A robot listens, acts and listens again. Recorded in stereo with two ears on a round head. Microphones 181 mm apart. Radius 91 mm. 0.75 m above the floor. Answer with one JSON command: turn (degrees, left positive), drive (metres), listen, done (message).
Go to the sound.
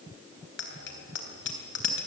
{"turn": 60}
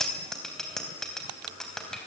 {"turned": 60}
{"drive": 1.0}
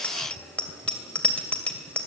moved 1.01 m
{"drive": 1.0}
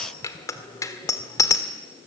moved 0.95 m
{"turn": 15}
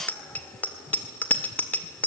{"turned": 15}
{"turn": 10}
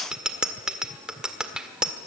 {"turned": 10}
{"drive": 1.0}
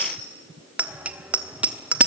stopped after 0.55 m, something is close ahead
{"done": "I am next to the bicycle bell."}